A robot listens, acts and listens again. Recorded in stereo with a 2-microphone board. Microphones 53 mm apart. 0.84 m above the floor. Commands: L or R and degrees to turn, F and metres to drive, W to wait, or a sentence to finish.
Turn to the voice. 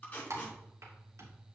W
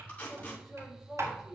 R30
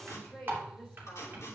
L20
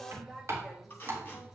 Facing the woman speaking, 2 to 4 m away.